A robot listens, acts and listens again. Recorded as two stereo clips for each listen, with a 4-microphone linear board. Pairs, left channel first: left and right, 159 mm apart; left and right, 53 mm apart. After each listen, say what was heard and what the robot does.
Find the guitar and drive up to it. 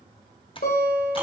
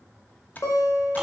The guitar: about 75° left or 105° left. Turn 75° left.
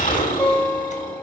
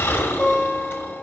So it is at 15° left. Turn 15° left.
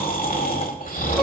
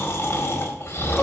Keep listening.
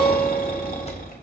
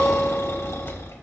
Keep listening.
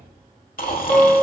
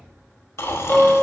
Drive 1.0 m forward.
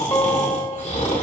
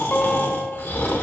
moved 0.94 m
The guitar is now 20° left. Turn 20° left.
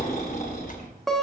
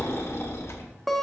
Drive 1.0 m forward.
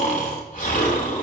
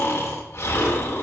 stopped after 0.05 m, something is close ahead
Keep listening.
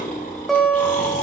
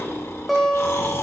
Arrived at the guitar, straight ahead.